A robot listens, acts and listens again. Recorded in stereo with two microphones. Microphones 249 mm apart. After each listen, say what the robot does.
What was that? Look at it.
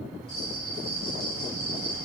Turn 60° left.
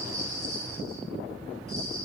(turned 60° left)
Turn 60° left.
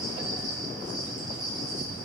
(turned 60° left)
Found it: a bell, straight ahead, over 4 m away.